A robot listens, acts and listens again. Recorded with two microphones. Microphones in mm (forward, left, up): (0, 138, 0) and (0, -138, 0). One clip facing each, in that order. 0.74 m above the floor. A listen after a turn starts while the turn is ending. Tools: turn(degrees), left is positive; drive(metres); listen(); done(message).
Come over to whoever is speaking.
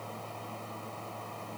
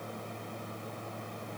listen()
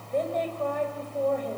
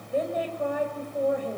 turn(degrees=-30)
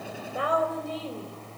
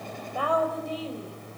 turn(degrees=25)
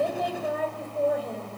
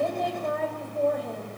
drive(metres=1.0)
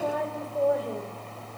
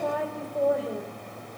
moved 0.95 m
drive(metres=1.0)
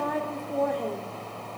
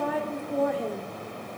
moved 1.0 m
drive(metres=1.0)
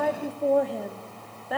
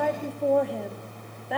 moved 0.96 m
drive(metres=1.0)
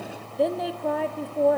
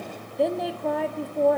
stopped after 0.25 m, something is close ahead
done("I am next to the woman speaking.")